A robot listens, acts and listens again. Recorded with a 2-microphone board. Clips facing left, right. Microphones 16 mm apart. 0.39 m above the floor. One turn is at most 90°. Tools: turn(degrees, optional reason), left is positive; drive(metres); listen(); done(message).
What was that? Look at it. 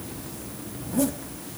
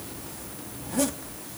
turn(degrees=-25, reason="The zipper: about 25° right or 155° right.")
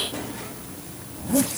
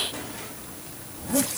done("Facing the zipper.")